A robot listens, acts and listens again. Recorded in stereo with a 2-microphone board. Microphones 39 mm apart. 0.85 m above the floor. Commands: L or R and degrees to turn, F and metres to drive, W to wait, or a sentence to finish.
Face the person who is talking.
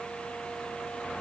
W
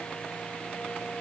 W
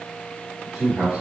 R15
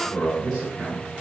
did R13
R30
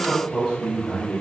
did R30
L20
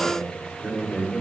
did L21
Facing the man speaking, over 4 m away.